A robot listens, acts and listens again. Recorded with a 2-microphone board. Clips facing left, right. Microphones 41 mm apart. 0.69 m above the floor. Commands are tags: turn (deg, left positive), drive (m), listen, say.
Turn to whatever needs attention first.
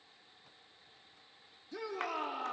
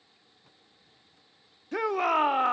<turn deg="-55"/>
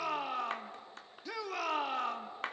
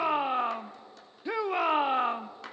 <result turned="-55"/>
<turn deg="-35"/>
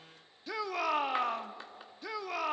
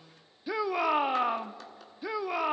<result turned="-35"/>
<turn deg="-15"/>
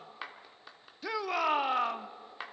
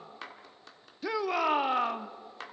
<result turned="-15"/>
<say>Found it: a shout, straight ahead, under 1 m away.</say>